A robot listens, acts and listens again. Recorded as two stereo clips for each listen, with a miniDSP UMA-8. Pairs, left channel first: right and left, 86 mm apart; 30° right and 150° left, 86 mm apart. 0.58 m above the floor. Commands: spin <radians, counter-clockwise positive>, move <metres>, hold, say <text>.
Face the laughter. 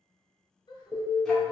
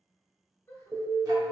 spin -1.66
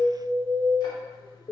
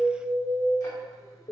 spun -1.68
hold
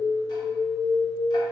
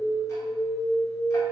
hold
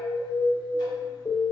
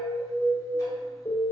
say I heard laughter from this way, but can't make it out now.